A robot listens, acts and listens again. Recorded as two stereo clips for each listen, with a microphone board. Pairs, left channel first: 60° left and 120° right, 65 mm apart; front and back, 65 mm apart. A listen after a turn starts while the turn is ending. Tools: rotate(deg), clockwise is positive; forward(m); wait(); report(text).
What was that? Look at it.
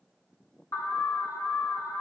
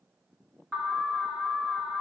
rotate(-90)
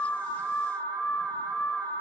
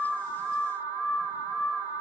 report("Facing the alarm.")